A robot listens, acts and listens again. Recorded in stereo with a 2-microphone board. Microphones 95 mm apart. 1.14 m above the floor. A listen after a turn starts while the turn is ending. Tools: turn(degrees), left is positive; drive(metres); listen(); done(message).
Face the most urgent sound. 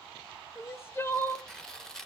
turn(degrees=25)
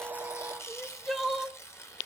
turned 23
done("Facing the crying.")